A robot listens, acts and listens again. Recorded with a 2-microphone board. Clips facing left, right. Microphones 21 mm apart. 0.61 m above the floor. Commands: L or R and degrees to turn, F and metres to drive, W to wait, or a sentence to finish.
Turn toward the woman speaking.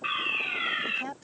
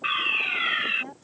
L45
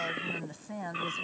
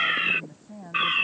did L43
L100
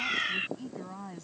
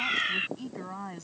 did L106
R35
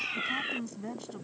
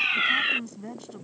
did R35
Facing the woman speaking.